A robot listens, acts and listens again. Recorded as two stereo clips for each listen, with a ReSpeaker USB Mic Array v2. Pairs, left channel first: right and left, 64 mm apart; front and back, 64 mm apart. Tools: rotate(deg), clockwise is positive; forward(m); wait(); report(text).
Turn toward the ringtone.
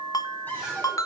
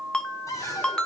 rotate(75)
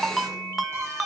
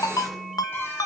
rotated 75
report("Facing the ringtone, under 1 m away.")